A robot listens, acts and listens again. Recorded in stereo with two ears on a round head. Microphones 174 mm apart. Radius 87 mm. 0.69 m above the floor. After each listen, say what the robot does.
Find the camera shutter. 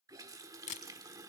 Turn 40° left.
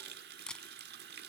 Facing the camera shutter, 1 to 2 m away.